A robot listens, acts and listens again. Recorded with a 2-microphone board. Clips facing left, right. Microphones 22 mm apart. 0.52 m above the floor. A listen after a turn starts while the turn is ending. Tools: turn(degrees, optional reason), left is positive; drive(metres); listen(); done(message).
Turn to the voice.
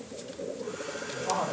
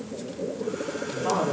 turn(degrees=-90)
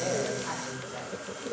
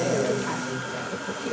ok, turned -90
listen()
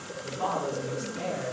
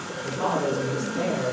turn(degrees=-10, reason="The woman speaking is now 10° right.")
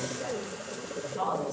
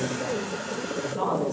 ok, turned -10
done("Facing the woman speaking, over 4 m away.")